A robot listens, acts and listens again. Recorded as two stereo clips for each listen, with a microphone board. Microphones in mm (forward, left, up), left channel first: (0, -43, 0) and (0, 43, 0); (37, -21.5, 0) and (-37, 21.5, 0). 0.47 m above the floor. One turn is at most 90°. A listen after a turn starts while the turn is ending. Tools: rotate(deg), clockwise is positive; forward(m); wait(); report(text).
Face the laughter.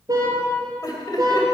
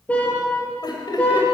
rotate(55)
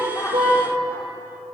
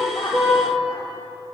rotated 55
wait()
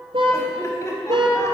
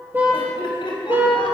rotate(40)
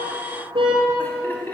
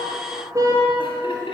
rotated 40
rotate(25)
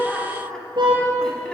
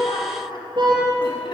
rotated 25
wait()
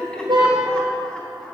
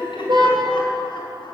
rotate(10)
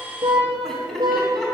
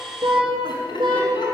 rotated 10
report("Found it: laughter, straight ahead, over 4 m away.")